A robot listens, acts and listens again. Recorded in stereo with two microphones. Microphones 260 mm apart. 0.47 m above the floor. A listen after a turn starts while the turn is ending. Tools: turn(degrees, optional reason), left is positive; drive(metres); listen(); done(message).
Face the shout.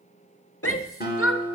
turn(degrees=55, reason="The shout: about 55° left or 125° left.")
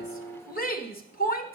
turn(degrees=40, reason="So it is at 40° left.")
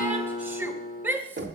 turn(degrees=-10, reason="The shout is now 10° right.")
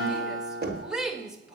done("Facing the shout.")